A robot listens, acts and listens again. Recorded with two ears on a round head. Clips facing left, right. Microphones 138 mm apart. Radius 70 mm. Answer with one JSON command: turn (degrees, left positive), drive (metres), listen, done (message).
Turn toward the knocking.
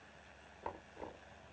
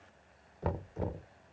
{"turn": -60}
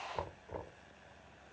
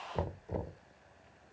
{"turn": -35}
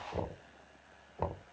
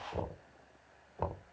{"done": "Found it: knocking, straight ahead."}